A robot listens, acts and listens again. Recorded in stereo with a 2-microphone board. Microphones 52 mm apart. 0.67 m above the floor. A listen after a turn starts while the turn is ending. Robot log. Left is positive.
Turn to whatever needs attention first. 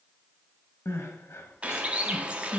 note: The crying: about 60° left or 120° left.
cmd yaw +60
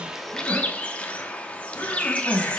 note: So it is at 60° left.
cmd yaw +60
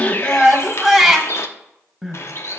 end: Found it: crying, straight ahead.